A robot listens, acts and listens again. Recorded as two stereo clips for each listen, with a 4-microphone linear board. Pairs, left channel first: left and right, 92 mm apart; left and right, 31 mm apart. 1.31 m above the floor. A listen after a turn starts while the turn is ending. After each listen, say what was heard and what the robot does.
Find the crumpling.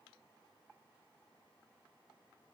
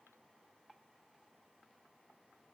Keep listening.
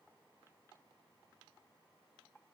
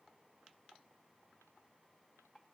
Keep listening.
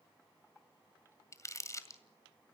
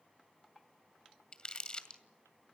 The crumpling: about 35° left or 145° left. Turn 35° left.
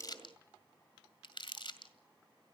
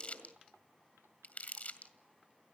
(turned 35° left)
So it is at 105° left. Turn 105° left.
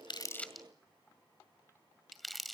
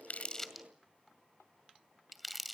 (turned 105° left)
Facing the crumpling.